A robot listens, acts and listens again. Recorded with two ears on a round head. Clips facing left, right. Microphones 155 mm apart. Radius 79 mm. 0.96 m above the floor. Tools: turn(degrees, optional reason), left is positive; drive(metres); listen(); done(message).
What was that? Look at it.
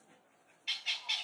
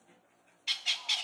turn(degrees=-55, reason="The bird: about 55° right or 125° right.")
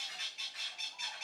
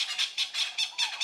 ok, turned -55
turn(degrees=-70, reason="So it is at 70° right.")
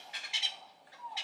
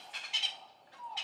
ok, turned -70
turn(degrees=10, reason="The bird is now 10° left.")
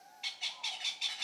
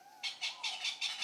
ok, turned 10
done("Facing the bird, 1 to 2 m away.")